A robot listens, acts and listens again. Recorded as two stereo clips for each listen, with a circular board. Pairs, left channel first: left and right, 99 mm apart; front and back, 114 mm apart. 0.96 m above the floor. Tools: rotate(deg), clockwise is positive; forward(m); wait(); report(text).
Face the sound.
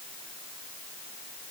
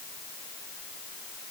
wait()
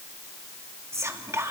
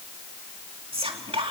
rotate(150)
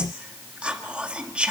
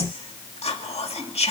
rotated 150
rotate(15)
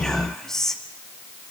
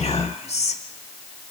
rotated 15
report("Facing the whispering, 2 to 4 m away.")